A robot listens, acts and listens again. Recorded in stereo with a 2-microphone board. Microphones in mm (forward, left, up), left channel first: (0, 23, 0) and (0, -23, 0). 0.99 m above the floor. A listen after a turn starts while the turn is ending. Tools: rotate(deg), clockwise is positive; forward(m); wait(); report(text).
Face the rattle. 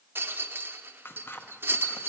rotate(55)
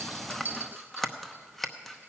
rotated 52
rotate(60)
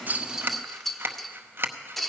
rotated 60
report("Found it: a rattle, straight ahead, under 1 m away.")